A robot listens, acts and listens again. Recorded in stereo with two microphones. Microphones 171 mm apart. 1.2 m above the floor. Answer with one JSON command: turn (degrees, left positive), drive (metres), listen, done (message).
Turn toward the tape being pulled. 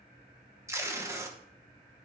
{"turn": -15}
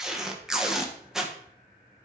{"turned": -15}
{"done": "Facing the tape being pulled."}